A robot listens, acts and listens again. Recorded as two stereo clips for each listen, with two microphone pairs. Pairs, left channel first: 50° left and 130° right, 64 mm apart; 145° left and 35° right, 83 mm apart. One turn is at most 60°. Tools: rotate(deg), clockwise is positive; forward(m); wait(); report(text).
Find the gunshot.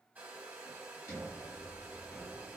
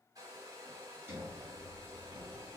wait()
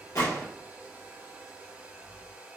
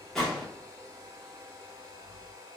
rotate(-60)
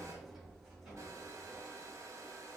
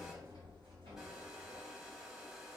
report("I heard a gunshot from this way, but can't make it out now.")